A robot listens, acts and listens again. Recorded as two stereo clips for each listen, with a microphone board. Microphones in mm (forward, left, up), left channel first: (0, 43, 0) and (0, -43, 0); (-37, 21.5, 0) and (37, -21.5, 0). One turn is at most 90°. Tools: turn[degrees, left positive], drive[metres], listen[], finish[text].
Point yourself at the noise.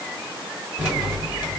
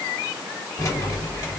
Thought: The keys jangling: 170° right.
Action: turn[-90]
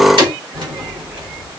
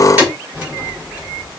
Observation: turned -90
Thought: The keys jangling is now 100° right.
Action: turn[-90]
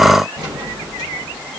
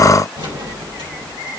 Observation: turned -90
Thought: The keys jangling is now 35° right.
Action: turn[-35]
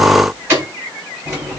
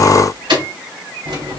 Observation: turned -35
Thought: The keys jangling is now 25° right.
Action: turn[-25]
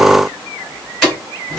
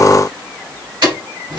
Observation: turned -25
Action: finish[Facing the keys jangling.]